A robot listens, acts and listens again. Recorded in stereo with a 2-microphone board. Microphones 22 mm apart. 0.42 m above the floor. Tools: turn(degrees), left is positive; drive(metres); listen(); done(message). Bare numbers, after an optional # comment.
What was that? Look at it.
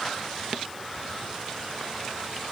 listen()
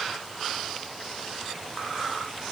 listen()
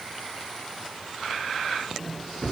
# The microwave: about 65° left or 115° left.
turn(65)
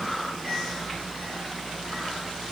# So it is at 10° left.
turn(10)
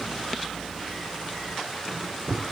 done("Facing the microwave.")